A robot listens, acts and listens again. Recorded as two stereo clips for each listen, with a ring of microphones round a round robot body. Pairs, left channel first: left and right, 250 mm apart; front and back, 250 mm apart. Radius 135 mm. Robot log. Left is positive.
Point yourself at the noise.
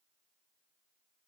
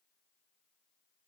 cmd idle
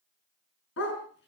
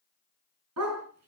note: The dog barking: 140° left.
cmd yaw +140
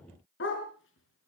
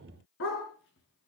note: The dog barking is now 50° left.
cmd yaw +50
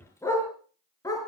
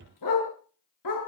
note: The dog barking is now 15° left.
cmd yaw +15
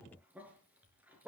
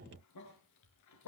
end: Found it: a dog barking, straight ahead.